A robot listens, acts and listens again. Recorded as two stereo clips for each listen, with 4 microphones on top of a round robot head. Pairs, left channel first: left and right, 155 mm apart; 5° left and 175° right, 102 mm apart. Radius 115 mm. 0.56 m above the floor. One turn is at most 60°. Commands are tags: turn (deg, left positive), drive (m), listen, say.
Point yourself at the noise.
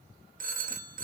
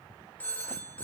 <turn deg="-60"/>
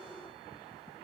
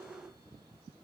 <turn deg="-10"/>
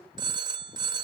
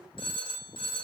<turn deg="-30"/>
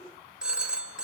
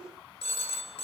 <say>Facing the phone ringing.</say>